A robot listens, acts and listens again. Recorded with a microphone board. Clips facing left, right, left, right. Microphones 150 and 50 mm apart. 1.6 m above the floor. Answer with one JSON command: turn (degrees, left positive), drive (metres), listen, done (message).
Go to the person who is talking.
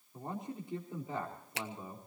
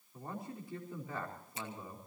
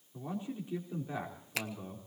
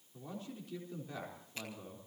{"turn": 25}
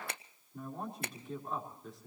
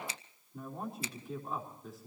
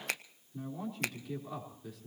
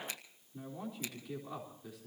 {"drive": 1.0}
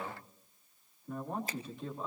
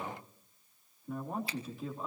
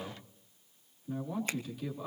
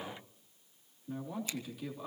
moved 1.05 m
{"drive": 1.0}
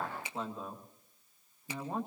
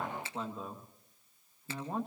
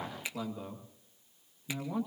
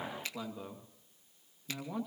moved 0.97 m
{"drive": 1.0}
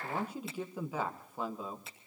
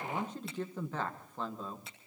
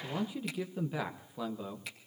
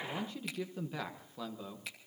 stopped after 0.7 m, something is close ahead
{"turn": 10}
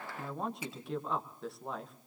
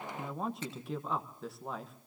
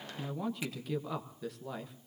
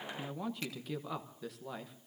{"done": "Arrived at the man speaking, straight ahead."}